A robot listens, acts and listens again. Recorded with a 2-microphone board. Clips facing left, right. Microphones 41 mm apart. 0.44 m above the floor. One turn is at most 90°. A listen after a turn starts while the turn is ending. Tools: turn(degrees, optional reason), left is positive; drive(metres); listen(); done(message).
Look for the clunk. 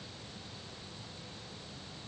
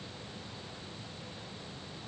listen()
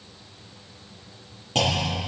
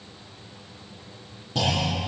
turn(degrees=70, reason="The clunk: about 70° left or 110° left.")
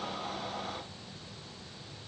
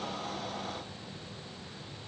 listen()
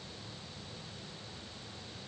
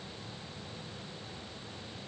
done("I heard a clunk, but can't make it out now. It was about straight ahead or 40° left.")